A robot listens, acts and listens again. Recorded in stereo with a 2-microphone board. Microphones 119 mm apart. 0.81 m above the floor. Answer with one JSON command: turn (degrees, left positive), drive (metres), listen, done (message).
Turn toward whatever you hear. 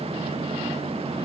{"listen": true}
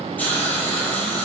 {"turn": 30}
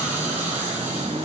{"turn": -15}
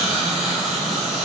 {"done": "Facing the hiss, over 4 m away."}